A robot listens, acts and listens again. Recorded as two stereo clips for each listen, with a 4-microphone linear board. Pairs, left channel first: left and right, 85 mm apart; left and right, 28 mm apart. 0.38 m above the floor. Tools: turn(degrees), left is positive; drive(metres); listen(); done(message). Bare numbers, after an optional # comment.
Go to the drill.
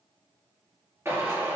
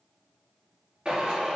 # The drill: about 30° right or 150° right.
turn(-30)
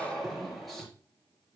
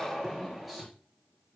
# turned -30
drive(1.0)
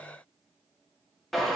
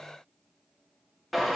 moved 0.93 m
drive(1.0)
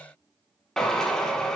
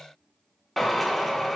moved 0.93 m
drive(1.0)
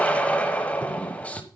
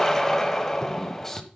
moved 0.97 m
# The drill is now 15° left.
turn(15)
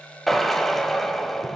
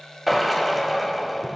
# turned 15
drive(1.0)
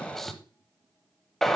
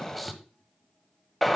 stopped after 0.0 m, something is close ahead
done("I am next to the drill.")